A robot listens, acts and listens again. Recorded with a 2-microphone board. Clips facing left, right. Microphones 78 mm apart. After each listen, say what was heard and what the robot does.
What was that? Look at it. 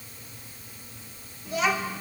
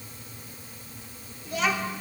Turn 30° left.
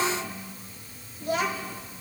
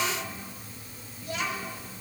So it is at 125° left. Turn 125° left.
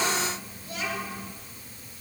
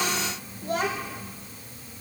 The child speaking is now 60° right. Turn 60° right.
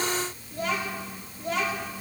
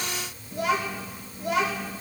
The child speaking is now 10° right. Turn 10° right.
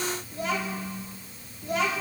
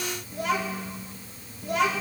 Found it: a child speaking, straight ahead.